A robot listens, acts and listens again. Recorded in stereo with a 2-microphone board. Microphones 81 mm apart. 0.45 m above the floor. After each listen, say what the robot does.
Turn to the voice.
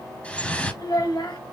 Turn 60° left.
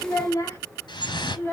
Turn 30° left.
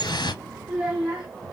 Turn 15° right.
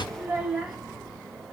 Facing the child speaking, 2 to 4 m away.